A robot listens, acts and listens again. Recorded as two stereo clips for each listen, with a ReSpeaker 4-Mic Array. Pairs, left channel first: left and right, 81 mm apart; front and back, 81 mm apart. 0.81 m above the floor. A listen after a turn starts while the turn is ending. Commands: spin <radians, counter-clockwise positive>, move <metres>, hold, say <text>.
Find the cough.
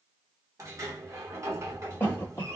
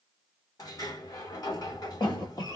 spin 0.44
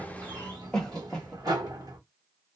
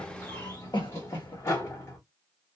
spin 0.17
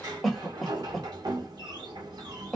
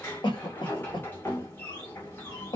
say Found it: a cough, straight ahead.